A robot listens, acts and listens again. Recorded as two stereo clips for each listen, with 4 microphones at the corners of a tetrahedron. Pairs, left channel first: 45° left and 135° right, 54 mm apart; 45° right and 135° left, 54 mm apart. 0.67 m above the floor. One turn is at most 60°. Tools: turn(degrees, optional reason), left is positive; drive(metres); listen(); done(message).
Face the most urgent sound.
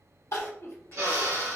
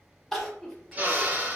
turn(degrees=35, reason="The crying: 35° left.")
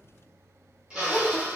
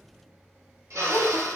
done("Found it: crying, straight ahead, under 1 m away.")